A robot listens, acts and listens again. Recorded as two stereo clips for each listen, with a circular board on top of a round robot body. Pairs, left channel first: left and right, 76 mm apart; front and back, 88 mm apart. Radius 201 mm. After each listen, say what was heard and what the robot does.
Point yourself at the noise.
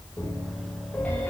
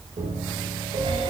The piano: 160° left. Turn 160° left.
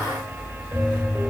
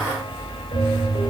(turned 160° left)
The piano is now 20° right. Turn 20° right.
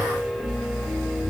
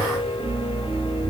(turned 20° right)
Found it: a piano, straight ahead.